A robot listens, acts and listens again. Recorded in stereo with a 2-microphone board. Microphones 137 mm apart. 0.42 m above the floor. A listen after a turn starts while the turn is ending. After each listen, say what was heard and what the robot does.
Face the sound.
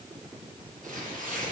Turn 90° right.
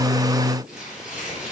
Found it: tearing paper, straight ahead, over 4 m away.